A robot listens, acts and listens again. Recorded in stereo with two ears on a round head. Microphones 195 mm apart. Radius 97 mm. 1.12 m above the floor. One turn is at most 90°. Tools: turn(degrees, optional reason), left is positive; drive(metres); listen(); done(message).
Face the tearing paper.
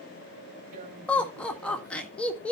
turn(degrees=-45, reason="The tearing paper: about 45° right or 135° right.")
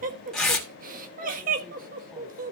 done("Facing the tearing paper, 2 to 4 m away.")